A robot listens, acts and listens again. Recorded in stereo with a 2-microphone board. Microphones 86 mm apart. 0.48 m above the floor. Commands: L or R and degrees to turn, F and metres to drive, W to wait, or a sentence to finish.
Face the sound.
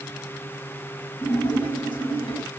L65
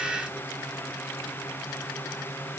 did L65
W
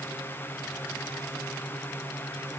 I heard a splash, but can't make it out now. It was about straight ahead or 50° left.